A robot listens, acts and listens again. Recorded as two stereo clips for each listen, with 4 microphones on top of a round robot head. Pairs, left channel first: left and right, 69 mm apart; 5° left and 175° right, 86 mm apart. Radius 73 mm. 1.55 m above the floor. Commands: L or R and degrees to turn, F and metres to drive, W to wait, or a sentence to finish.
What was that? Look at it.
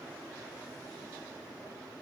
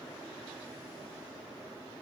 W
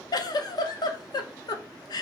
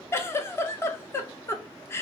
L65
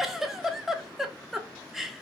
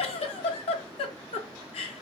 Found it: a giggle, straight ahead.